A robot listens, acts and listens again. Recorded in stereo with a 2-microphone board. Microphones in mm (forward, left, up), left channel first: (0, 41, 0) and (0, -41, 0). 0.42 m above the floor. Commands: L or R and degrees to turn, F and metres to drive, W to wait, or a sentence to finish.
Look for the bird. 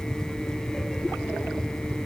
W
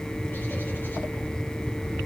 W
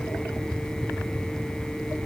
I can't make out a bird to turn to.